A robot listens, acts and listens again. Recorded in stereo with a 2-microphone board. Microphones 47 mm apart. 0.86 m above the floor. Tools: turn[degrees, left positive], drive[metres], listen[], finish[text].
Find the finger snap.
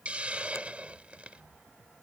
Thought: The finger snap: about 70° left or 110° left.
Action: turn[70]
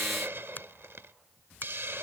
Thought: So it is at 40° left.
Action: turn[40]
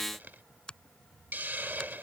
Thought: The finger snap is now 20° left.
Action: turn[20]
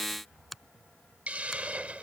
Action: finish[Facing the finger snap.]